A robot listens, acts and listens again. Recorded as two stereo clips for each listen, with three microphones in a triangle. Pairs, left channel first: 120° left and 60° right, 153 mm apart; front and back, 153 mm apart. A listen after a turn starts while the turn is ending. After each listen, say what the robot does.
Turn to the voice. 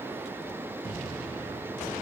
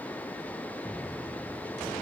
Keep listening.
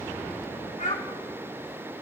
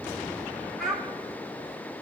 Turn 85° left.
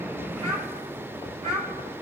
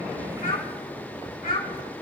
Turn 20° right.
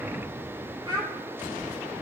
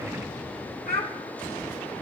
Facing the child speaking, 2 to 4 m away.